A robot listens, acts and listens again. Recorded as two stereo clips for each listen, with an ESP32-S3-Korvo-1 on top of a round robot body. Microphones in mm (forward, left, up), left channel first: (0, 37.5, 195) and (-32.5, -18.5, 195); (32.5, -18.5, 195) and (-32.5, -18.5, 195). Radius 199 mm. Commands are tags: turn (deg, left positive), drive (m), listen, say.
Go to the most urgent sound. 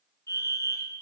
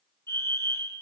<turn deg="35"/>
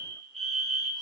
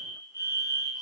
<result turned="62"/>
<turn deg="-25"/>
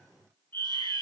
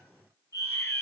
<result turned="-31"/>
<drive m="1.0"/>
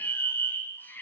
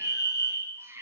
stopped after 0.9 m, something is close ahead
<turn deg="10"/>
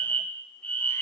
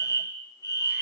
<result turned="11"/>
<say>Something is in my way. I am facing the fire alarm but have not reached it.</say>